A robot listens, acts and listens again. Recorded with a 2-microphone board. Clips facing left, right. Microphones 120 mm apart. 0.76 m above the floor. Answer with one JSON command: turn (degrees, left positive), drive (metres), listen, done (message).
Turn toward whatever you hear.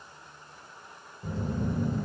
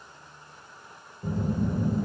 {"turn": -30}
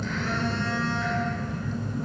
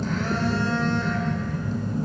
{"turn": -135}
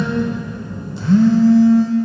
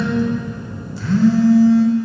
{"turn": 25}
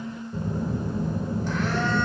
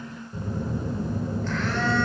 {"turn": 15}
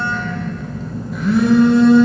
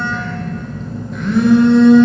{"done": "Found it: a phone buzzing, straight ahead."}